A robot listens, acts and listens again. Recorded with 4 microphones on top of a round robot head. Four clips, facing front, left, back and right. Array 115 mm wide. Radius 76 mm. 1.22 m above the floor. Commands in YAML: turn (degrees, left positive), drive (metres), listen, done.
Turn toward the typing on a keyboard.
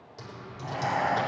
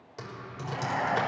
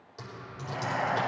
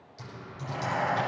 turn: 95
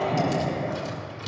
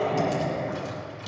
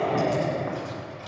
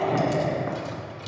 turn: -15
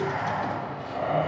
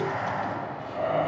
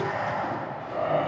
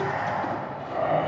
listen: true
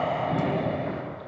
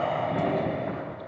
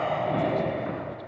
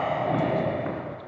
listen: true
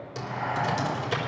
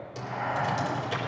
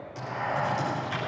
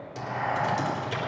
done: "Facing the typing on a keyboard, 2 to 4 m away."